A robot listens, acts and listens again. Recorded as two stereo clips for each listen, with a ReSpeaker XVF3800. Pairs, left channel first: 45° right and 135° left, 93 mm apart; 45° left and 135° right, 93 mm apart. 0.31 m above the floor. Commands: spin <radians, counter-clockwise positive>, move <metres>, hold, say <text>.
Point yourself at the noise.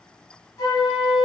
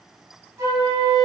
spin -1.57
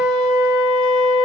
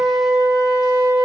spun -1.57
spin -0.26
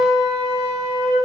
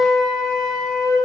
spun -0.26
say Found it: a flute, straight ahead, 1 to 2 m away.